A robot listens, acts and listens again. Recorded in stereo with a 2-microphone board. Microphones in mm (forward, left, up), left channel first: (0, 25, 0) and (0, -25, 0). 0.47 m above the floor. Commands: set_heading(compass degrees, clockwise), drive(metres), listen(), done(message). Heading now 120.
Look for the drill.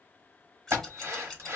set_heading(190)
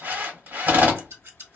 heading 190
set_heading(230)
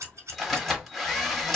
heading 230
done("Found it: a drill, straight ahead.")